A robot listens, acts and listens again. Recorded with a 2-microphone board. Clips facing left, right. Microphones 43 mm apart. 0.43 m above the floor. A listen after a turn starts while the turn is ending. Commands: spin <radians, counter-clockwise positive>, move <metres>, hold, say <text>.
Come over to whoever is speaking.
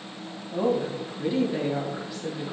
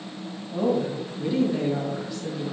spin 0.52
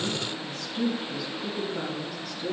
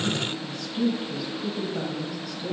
spin -0.26
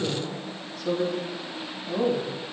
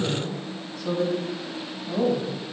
move 1.0
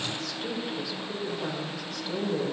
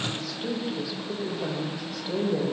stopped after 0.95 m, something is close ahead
spin -0.17
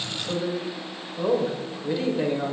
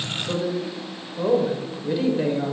say I am next to the woman speaking.